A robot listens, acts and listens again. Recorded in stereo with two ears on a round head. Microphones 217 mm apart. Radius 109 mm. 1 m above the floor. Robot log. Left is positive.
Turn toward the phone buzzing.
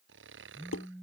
cmd yaw -30
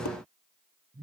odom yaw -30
note: So it is at 145° right.
cmd yaw -145
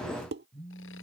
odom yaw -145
end: Facing the phone buzzing.